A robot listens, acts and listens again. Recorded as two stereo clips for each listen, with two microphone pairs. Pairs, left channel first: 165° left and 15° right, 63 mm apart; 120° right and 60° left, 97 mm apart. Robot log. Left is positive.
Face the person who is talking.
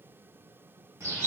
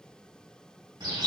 cmd idle
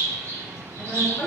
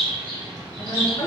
note: The woman speaking: 155° right.
cmd yaw -155
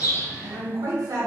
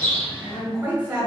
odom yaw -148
note: The woman speaking is now 10° right.
cmd yaw -10
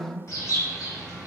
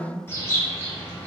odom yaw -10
end: Facing the woman speaking.